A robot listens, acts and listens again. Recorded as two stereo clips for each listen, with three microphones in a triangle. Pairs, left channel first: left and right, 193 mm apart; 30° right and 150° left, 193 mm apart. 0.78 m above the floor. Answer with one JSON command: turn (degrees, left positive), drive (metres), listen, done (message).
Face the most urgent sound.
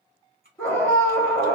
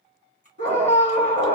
{"turn": 170}
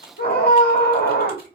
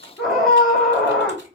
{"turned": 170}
{"turn": 60}
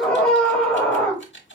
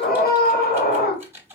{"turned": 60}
{"done": "Found it: a scream, straight ahead, 1 to 2 m away."}